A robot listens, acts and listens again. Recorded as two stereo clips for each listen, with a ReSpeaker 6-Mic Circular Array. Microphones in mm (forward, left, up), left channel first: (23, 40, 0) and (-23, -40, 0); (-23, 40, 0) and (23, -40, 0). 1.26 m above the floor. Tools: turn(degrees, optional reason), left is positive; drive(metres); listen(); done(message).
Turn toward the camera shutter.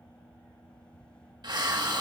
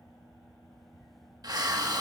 listen()
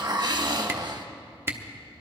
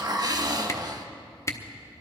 turn(degrees=175, reason="The camera shutter: 175° left.")
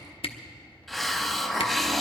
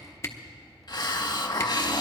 turn(degrees=60, reason="The camera shutter is now 60° left.")
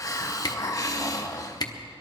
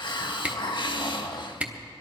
turn(degrees=15, reason="The camera shutter is now 15° left.")
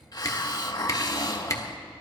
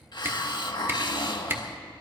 done("Found it: a camera shutter, straight ahead, under 1 m away.")